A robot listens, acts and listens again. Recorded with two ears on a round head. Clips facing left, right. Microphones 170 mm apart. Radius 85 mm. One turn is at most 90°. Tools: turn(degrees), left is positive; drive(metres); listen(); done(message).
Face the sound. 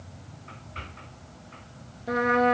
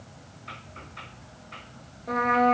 turn(degrees=30)
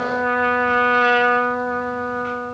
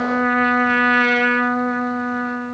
turn(degrees=-20)
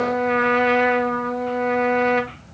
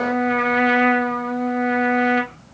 done("Facing the trumpet.")